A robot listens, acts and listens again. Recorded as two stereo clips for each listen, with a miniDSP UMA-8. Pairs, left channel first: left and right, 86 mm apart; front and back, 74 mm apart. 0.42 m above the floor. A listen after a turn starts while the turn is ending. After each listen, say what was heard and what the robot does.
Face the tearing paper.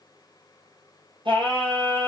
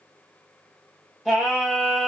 Keep listening.
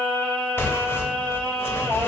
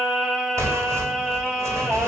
The tearing paper: 145° left. Turn 145° left.
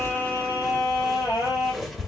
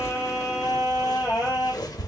Found it: tearing paper, straight ahead, under 1 m away.